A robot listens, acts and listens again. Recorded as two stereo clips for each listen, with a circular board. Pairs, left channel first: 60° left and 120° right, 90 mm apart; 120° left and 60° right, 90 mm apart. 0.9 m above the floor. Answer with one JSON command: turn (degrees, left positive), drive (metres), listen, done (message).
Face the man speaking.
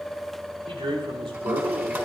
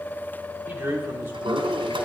{"turn": -125}
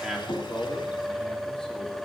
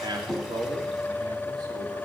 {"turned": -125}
{"turn": -30}
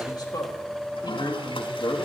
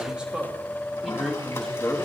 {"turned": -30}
{"turn": 45}
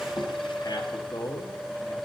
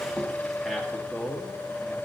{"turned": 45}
{"turn": 25}
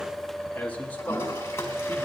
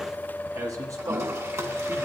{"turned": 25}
{"turn": -10}
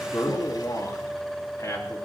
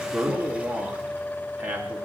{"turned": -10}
{"done": "Facing the man speaking, 1 to 2 m away."}